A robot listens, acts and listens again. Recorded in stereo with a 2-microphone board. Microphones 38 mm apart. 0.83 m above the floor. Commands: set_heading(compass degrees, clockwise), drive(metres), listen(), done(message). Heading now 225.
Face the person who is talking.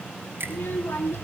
set_heading(135)
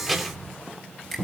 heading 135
done("Found it: a child speaking, straight ahead.")